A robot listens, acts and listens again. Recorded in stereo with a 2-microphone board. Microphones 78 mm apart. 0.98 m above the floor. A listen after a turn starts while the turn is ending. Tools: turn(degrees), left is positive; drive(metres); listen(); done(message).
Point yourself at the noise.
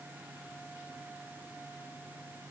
listen()
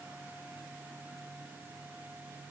listen()
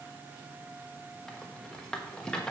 turn(degrees=30)
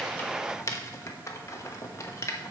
turn(degrees=135)
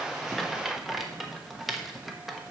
done("Facing the rattle, 1 to 2 m away.")